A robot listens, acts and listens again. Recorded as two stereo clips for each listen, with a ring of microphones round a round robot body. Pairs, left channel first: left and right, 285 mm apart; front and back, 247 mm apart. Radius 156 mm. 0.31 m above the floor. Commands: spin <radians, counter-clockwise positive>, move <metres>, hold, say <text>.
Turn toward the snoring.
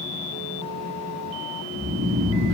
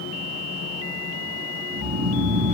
spin -3.05
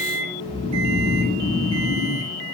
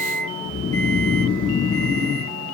spin -0.26
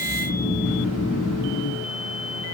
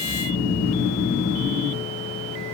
say Facing the snoring, over 4 m away.